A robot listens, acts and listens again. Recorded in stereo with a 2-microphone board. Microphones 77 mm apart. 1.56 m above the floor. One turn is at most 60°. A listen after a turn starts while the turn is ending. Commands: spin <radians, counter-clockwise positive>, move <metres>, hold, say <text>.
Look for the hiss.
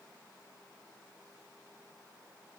hold
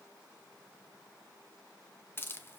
spin 0.52
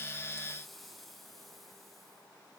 hold
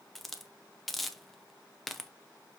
say Facing the hiss.